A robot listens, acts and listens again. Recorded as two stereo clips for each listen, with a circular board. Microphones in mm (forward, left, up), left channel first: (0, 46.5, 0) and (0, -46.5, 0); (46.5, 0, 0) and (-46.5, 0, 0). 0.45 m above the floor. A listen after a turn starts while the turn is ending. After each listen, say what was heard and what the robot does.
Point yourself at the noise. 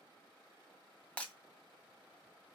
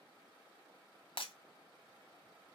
The breaking glass: 15° left. Turn 15° left.
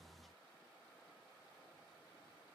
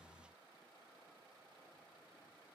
Facing where the breaking glass came from. I can't hear it now.